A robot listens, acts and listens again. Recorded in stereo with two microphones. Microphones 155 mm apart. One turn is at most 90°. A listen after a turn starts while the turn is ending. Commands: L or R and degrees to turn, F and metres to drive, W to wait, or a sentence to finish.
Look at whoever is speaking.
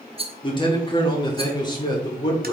L25
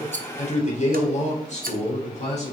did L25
L90
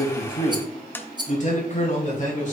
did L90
L50
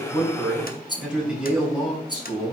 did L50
Facing the man speaking, 2 to 4 m away.